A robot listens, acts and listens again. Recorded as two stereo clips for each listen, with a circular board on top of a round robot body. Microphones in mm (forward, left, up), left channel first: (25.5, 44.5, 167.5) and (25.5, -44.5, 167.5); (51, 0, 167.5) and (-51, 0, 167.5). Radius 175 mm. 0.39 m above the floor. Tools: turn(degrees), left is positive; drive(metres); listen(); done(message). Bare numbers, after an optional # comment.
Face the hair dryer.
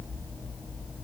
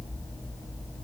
listen()
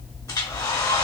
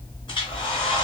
# The hair dryer: 45° left.
turn(45)
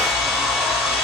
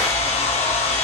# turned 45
done("Found it: a hair dryer, straight ahead.")